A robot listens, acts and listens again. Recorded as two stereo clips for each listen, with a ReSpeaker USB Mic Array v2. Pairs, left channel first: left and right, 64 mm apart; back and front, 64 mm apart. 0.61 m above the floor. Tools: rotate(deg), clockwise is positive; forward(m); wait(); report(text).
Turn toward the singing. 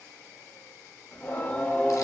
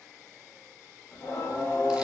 rotate(-160)
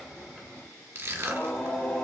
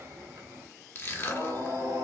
rotate(-15)
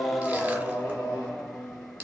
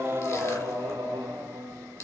rotate(-10)
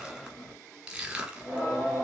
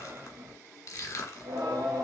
report("Facing the singing.")